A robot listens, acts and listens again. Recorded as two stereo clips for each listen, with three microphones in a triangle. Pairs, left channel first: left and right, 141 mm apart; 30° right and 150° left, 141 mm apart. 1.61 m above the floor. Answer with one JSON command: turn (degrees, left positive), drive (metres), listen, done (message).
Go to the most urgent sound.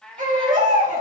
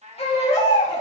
{"turn": -75}
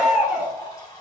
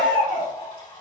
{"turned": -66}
{"drive": 1.0}
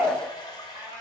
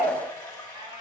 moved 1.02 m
{"turn": -20}
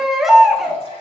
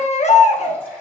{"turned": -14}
{"drive": 1.0}
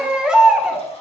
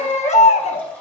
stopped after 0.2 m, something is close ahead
{"done": "I am next to the baby crying."}